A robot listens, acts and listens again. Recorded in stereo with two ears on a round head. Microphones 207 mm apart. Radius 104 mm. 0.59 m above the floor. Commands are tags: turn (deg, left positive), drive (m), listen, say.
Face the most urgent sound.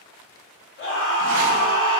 <turn deg="60"/>
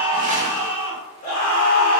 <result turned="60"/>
<turn deg="40"/>
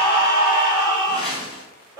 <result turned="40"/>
<turn deg="-25"/>
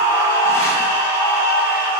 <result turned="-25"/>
<turn deg="-10"/>
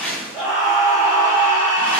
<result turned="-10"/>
<say>Found it: a scream, straight ahead.</say>